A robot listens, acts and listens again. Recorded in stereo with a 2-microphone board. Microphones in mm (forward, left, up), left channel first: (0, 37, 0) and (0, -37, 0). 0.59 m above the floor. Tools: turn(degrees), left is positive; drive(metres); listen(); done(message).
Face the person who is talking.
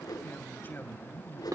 turn(degrees=25)
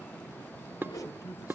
turn(degrees=125)
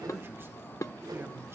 listen()
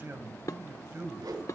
turn(degrees=-35)
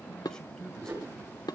turn(degrees=10)
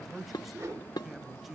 done("Facing the man speaking.")